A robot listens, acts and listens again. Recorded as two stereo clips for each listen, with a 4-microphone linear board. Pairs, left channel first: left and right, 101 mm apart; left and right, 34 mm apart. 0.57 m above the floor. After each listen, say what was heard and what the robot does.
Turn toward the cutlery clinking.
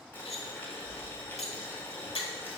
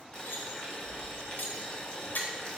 Turn 90° left.
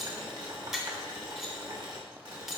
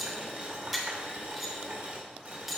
Found it: cutlery clinking, straight ahead, 1 to 2 m away.